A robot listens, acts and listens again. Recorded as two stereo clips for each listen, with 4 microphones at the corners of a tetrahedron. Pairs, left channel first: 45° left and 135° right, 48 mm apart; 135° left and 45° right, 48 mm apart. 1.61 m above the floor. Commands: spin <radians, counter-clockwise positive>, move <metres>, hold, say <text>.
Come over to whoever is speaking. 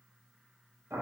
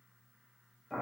hold
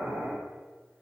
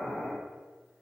hold
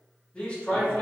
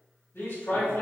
spin 2.01
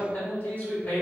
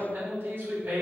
move 1.0
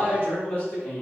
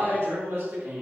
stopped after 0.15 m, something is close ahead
say Blocked. The man speaking is further on, straight ahead.